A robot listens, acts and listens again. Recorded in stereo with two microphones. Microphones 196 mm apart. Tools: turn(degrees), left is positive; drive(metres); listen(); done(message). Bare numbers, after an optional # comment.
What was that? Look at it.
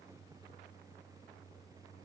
listen()
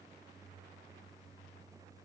listen()
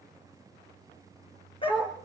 # The dog barking: about 25° left or 155° left.
turn(25)
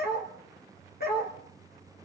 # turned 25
# So it is at 130° left.
turn(130)
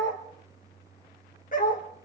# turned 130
# The dog barking is now 45° left.
turn(45)
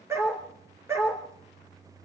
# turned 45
# The dog barking is now 15° right.
turn(-15)
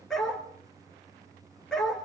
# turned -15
done("Facing the dog barking, 2 to 4 m away.")